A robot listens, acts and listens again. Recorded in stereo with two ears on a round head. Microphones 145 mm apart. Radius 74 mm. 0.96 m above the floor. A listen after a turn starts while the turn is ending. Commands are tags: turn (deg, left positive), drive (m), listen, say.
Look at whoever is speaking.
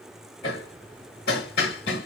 <listen/>
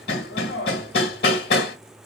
<listen/>
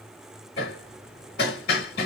<say>I can't make out anyone speaking, only hammering.</say>